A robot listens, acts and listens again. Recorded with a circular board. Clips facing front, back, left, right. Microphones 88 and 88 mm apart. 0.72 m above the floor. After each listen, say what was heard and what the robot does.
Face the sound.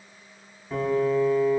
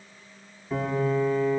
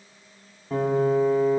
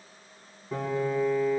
The piano: 90° left. Turn 90° left.
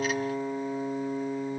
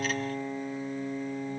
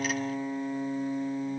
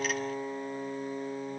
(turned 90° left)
The piano is now 25° left. Turn 25° left.
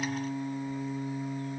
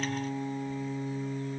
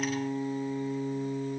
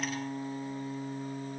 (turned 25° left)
Facing the piano.